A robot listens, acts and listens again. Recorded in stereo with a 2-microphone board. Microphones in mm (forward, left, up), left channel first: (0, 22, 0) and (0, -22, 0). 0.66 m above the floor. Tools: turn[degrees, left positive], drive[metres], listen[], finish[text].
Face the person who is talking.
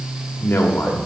Thought: The man speaking: about 55° left or 125° left.
Action: turn[55]
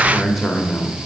Action: finish[Facing the man speaking.]